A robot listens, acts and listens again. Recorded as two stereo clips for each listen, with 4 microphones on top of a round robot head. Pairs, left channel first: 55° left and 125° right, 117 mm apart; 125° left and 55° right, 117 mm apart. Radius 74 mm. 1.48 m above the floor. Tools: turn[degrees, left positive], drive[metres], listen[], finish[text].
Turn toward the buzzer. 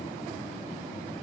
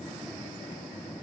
Action: listen[]
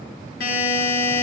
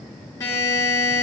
Thought: The buzzer: 60° left.
Action: turn[60]
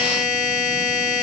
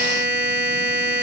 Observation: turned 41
Thought: The buzzer is now 15° left.
Action: turn[15]
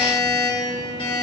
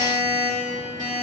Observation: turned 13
Action: finish[Facing the buzzer.]